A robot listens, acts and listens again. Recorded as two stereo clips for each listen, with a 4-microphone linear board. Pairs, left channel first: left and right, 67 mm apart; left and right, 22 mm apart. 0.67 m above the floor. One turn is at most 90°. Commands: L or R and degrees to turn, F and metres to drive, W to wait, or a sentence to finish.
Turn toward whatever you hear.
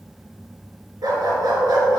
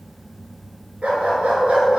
R70
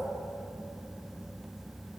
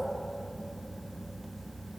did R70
W
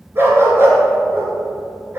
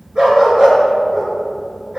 R35
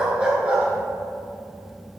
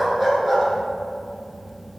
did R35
R15
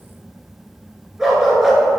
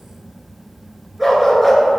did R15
Facing the dog barking.